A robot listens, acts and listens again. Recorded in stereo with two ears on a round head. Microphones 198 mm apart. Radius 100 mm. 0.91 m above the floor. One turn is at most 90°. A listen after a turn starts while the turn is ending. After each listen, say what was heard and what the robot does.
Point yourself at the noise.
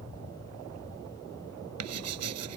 Turn 90° right.
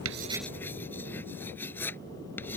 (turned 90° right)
So it is at 10° left. Turn 10° left.
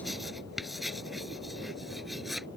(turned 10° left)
Facing the writing.